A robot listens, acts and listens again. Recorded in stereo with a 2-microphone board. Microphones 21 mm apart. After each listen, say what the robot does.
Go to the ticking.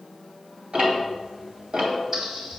Turn 50° right.
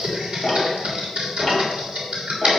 Turn 10° right.
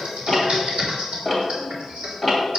Drive 1.0 m forward.
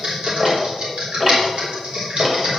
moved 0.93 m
Turn 15° right.
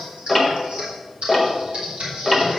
Drive 1.0 m forward.
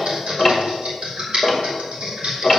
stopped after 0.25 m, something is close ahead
I am next to the ticking.